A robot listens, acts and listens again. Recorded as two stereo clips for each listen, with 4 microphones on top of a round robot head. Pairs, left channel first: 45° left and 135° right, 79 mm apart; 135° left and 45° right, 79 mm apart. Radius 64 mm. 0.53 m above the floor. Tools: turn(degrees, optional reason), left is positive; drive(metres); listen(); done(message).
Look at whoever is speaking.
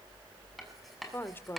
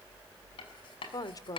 turn(degrees=100, reason="The woman speaking: 100° left.")
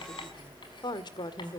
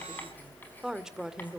turn(degrees=35, reason="The woman speaking is now 35° left.")
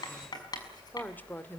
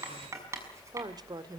turn(degrees=-20, reason="The woman speaking is now 20° right.")
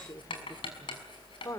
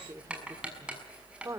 done("Facing the woman speaking.")